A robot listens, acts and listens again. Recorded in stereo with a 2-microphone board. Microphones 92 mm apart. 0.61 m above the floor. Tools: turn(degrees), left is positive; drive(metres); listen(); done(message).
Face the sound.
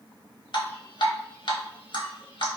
turn(degrees=65)
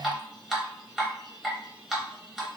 done("Facing the dripping, under 1 m away.")